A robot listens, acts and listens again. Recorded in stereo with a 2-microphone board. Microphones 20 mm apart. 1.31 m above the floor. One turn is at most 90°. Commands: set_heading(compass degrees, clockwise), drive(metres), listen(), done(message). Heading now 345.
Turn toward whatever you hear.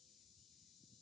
listen()
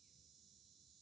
listen()
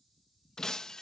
set_heading(320)
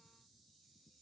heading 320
listen()
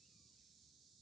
done("I heard breaking glass, but can't make it out now. It was about straight ahead or 130° left.")